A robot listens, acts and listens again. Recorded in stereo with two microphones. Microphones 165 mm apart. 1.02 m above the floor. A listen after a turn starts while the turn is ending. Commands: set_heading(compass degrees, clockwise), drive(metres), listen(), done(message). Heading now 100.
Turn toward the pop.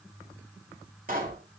set_heading(155)
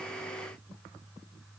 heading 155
listen()
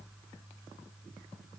done("I heard a pop, but can't make it out now. It was about straight ahead or 70° right.")